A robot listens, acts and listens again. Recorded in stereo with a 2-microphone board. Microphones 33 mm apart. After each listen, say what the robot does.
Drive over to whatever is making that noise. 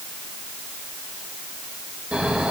Turn 35° right.
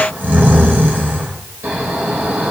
Turn 105° right.
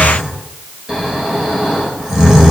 Turn 15° right.
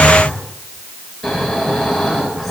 Drive 1.0 m forward.
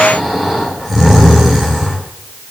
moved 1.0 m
Turn 10° right.
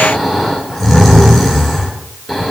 Drive 1.0 m forward.
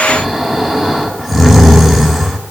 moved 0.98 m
Turn 10° right.
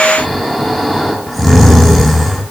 Drive 1.0 m forward.
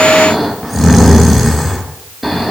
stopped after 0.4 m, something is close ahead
Arrived at the snoring, straight ahead.